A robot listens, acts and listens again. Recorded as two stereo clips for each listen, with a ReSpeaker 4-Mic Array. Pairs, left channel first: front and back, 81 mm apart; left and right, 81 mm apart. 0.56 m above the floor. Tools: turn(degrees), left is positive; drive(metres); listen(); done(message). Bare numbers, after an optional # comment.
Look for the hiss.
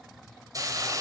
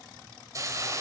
# The hiss: 135° right.
turn(-135)
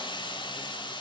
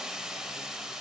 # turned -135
done("Found it: a hiss, straight ahead.")